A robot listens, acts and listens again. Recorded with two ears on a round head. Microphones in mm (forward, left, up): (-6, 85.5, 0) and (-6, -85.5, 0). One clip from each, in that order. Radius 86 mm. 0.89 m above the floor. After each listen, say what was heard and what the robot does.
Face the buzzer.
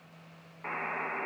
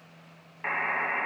The buzzer: about 55° right or 125° right. Turn 55° right.
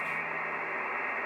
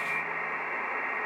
Facing the buzzer.